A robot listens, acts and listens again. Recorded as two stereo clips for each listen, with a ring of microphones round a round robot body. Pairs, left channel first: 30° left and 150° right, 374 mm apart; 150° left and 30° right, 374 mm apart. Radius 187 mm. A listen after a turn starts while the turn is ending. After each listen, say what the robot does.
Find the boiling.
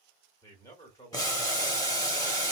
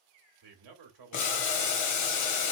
Turn 110° left.
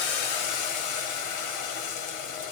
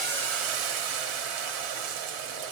Found it: boiling, straight ahead.